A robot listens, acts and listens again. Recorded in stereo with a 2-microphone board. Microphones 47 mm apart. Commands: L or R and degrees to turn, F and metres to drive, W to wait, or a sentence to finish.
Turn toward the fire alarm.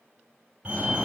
R35
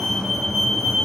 Facing the fire alarm, over 4 m away.